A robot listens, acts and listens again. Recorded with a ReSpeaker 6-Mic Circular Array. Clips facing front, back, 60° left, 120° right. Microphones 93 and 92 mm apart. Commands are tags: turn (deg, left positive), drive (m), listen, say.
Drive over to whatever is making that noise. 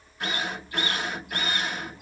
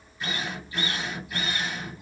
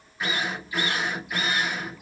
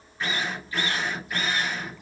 <turn deg="-20"/>
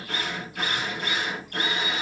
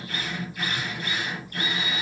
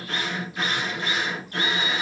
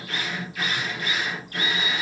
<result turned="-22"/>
<drive m="1.0"/>
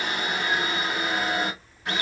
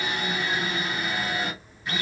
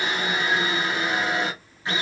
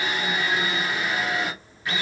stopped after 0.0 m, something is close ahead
<say>Something is in my way. I am facing the drill but have not reached it.</say>